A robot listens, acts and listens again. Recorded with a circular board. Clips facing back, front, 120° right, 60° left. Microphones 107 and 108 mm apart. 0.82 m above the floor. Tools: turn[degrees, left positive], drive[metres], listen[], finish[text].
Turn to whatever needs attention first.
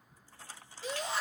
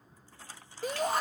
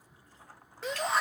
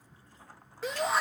Thought: The shout: 30° right.
Action: turn[-30]
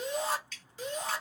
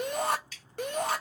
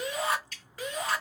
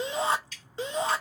Action: finish[Facing the shout, under 1 m away.]